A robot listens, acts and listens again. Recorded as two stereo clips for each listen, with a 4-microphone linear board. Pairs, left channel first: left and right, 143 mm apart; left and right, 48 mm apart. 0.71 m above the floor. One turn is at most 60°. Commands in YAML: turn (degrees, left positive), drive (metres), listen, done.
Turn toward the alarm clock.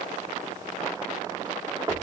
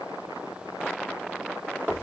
listen: true
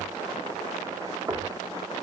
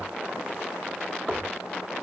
listen: true
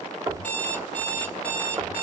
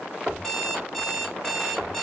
turn: 30
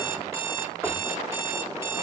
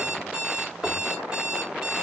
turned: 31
turn: -20
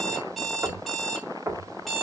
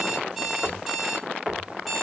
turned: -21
done: "Facing the alarm clock, 2 to 4 m away."